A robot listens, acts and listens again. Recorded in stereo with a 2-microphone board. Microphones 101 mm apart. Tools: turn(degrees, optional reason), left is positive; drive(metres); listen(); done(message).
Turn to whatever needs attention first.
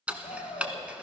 turn(degrees=70, reason="The shout: about 70° left or 110° left.")
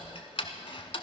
listen()
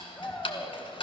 turn(degrees=25, reason="So it is at 25° left.")
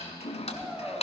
done("Facing the shout, 2 to 4 m away.")